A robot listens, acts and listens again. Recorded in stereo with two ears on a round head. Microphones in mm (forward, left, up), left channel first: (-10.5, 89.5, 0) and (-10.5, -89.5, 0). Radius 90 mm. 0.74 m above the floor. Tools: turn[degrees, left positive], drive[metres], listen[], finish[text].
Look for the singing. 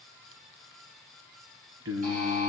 Action: turn[-90]
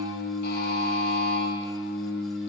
Action: finish[Facing the singing.]